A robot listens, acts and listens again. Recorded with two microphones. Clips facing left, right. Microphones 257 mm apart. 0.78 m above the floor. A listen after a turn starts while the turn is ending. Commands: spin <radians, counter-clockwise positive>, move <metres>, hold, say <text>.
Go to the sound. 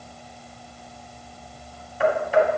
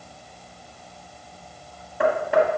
spin -1.13
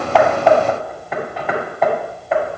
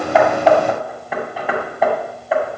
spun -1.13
move 1.0
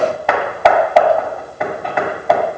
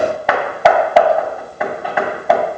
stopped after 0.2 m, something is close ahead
say Blocked. The hammering is further on, straight ahead.